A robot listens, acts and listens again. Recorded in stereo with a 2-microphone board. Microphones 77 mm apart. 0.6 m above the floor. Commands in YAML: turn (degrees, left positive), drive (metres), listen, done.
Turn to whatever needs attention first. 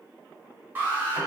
turn: -25
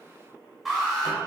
done: "Found it: an alarm, straight ahead."